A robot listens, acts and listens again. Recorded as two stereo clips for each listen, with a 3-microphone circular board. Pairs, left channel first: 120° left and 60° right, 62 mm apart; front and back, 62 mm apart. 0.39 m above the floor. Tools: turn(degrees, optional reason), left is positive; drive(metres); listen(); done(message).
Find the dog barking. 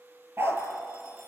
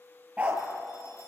turn(degrees=-110, reason="The dog barking: 110° right.")
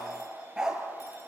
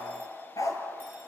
turn(degrees=20, reason="The dog barking is now 20° left.")
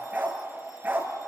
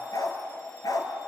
done("Facing the dog barking.")